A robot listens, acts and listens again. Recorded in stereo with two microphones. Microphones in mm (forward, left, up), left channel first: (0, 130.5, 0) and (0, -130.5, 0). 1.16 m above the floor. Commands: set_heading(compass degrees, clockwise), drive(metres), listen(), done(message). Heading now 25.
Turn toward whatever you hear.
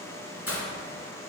set_heading(325)
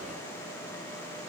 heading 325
listen()
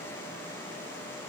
done("I heard breaking glass, but can't make it out now. It was about straight ahead or 60° left.")